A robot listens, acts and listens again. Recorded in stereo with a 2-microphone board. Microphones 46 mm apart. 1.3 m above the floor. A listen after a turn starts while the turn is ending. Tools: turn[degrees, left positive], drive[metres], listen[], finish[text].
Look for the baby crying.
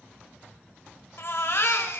Thought: The baby crying: about 60° left or 120° left.
Action: turn[60]
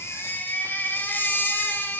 Thought: So it is at 55° left.
Action: turn[55]
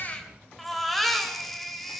Action: finish[Found it: a baby crying, straight ahead.]